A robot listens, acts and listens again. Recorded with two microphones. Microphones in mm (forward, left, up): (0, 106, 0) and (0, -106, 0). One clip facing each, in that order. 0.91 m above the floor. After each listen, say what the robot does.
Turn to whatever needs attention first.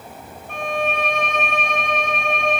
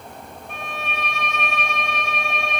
Keep listening.
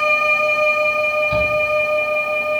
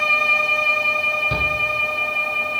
Turn 65° right.
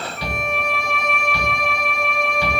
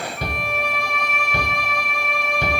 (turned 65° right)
Turn 45° right.
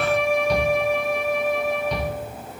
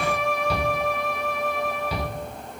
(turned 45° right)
Found it: a shout, straight ahead.